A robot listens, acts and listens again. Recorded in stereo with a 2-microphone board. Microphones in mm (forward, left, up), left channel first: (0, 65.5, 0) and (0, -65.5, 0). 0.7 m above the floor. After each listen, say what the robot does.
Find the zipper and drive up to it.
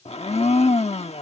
Keep listening.
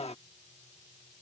Keep listening.
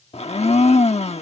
I can't make out a zipper to turn to.